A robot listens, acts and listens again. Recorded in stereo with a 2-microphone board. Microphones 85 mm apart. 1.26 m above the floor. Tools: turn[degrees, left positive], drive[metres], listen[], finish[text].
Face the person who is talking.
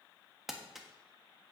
Action: listen[]
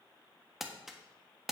Action: listen[]
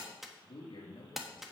Thought: The man speaking: about 75° left or 105° left.
Action: turn[75]
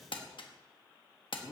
Action: finish[Found it: a man speaking, straight ahead.]